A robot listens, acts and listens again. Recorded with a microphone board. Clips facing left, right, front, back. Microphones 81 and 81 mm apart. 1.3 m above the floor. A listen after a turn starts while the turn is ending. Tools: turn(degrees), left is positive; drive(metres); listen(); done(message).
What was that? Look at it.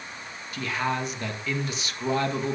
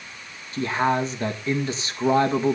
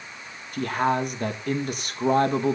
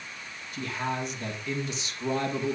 turn(degrees=-35)
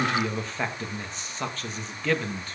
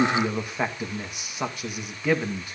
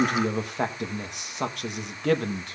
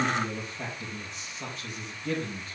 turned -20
turn(degrees=-15)
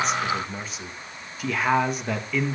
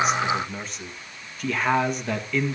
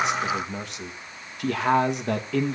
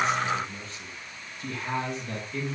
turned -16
done("Found it: a man speaking, straight ahead.")